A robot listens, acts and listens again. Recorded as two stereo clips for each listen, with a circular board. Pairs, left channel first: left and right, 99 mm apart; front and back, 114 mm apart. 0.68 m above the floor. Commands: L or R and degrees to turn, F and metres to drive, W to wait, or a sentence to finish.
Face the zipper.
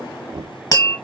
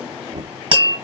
W
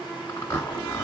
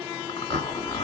L30
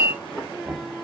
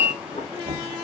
Found it: a zipper, straight ahead, 1 to 2 m away.